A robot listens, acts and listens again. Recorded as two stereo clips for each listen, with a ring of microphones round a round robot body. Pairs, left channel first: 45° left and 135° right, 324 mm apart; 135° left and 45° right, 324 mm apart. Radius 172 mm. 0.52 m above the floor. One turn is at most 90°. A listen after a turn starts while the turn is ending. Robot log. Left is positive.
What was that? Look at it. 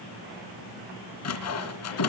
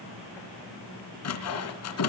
note: The sawing: 90° left.
cmd yaw +90
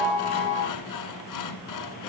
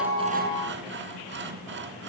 note: The sawing is now 10° left.
cmd yaw +10
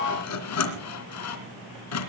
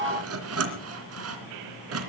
end: Facing the sawing, 2 to 4 m away.